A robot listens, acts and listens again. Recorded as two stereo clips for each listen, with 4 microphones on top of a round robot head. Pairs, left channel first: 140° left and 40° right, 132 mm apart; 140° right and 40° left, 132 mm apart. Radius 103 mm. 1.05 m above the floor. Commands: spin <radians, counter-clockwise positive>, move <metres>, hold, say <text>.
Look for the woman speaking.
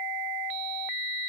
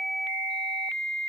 hold
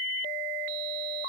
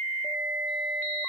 hold
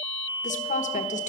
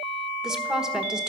spin 2.18
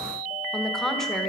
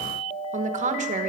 spin 0.96
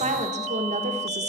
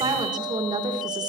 spin -0.26
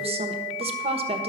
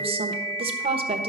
say Facing the woman speaking.